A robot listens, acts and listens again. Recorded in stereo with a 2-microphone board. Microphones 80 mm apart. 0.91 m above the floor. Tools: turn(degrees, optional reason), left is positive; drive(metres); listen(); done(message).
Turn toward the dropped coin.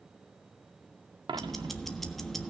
turn(degrees=-90)
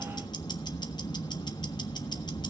done("Facing where the dropped coin came from. I can't hear it now.")